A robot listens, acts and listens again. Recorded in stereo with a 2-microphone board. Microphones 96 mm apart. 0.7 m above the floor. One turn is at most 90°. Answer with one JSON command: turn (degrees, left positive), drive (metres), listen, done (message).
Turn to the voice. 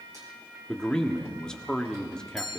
{"turn": 30}
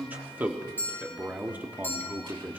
{"turn": -20}
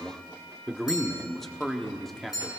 {"done": "Found it: a man speaking, straight ahead, 1 to 2 m away."}